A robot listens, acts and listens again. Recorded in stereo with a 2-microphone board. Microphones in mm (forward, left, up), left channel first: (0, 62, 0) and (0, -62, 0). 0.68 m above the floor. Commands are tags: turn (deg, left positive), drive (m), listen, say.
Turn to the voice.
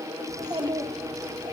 <turn deg="-30"/>
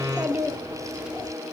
<turn deg="-10"/>
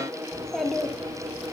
<say>Facing the child speaking, 1 to 2 m away.</say>